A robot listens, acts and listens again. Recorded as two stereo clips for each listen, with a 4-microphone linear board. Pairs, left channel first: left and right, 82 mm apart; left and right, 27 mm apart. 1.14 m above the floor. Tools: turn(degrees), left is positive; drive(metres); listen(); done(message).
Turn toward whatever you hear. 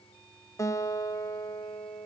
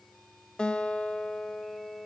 turn(degrees=40)
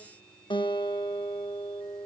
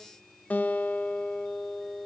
turn(degrees=100)
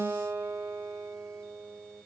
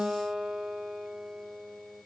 turn(degrees=-30)
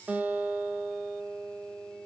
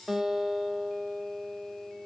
turn(degrees=-20)
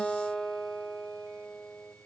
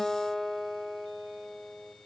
done("Found it: a guitar, straight ahead.")